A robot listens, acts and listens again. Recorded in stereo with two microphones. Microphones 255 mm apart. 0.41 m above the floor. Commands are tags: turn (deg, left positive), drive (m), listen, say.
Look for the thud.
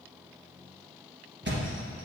<turn deg="-45"/>
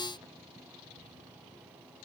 <listen/>
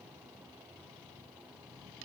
<say>I heard a thud, but can't make it out now. It was about straight ahead or 90° right.</say>